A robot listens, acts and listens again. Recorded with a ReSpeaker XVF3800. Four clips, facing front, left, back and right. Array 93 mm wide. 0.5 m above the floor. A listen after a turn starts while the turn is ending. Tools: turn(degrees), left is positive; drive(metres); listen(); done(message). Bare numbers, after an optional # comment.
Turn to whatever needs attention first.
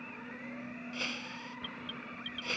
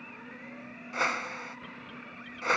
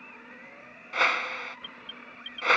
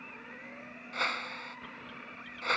done("Found it: an alarm, straight ahead.")